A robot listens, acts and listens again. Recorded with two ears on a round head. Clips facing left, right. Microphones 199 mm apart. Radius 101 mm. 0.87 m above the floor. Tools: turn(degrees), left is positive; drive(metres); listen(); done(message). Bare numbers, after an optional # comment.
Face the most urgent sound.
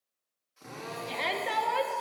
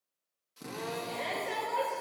# The shout: about 70° left or 110° left.
turn(70)
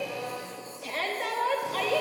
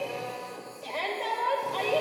# So it is at 25° left.
turn(25)
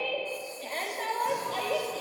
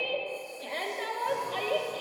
done("Facing the shout, 1 to 2 m away.")